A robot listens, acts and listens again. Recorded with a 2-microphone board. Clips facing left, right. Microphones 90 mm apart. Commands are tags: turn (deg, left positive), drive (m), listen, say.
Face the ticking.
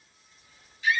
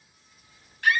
<listen/>
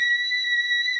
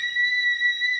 <listen/>
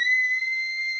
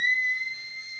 <say>I can't make out ticking, only a scream.</say>